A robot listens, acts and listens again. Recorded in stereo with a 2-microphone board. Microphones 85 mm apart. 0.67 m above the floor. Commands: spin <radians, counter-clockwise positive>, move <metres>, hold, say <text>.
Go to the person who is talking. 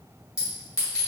hold
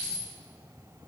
hold
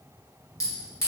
say I can't make out anyone speaking to turn to.